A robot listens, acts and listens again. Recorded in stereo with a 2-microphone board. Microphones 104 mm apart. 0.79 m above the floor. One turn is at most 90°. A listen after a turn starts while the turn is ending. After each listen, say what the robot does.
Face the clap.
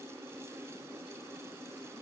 Keep listening.
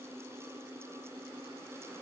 Keep listening.
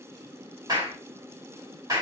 Turn 40° right.
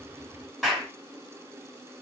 Found it: a clap, straight ahead, 2 to 4 m away.